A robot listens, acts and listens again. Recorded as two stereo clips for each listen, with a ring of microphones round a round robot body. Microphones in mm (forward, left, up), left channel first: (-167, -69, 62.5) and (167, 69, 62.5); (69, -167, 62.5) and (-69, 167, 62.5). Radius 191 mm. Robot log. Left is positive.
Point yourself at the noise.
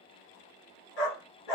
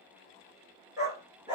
note: The dog barking: 170° right.
cmd yaw -170
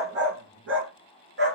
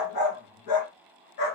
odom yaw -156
note: The dog barking is now 40° right.
cmd yaw -40
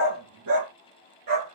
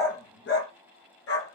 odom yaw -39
note: The dog barking is now 15° right.
cmd yaw -15
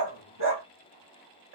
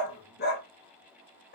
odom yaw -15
end: Found it: a dog barking, straight ahead, 2 to 4 m away.